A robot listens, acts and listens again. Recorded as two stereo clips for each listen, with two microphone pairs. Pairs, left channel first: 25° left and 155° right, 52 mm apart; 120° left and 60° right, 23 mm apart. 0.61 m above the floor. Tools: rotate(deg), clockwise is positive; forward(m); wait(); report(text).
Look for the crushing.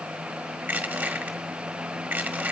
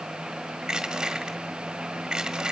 rotate(110)
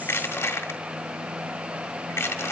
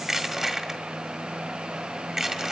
report("Facing the crushing.")